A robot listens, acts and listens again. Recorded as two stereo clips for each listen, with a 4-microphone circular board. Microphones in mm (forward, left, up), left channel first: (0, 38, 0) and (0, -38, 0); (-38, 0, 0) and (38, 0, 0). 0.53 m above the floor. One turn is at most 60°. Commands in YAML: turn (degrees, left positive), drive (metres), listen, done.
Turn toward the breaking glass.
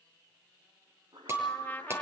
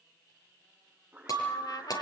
turn: -60
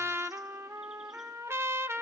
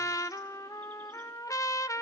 turn: -60
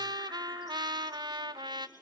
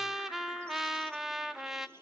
turn: -25
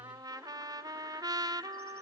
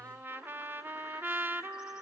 done: "Facing where the breaking glass came from. I can't hear it now."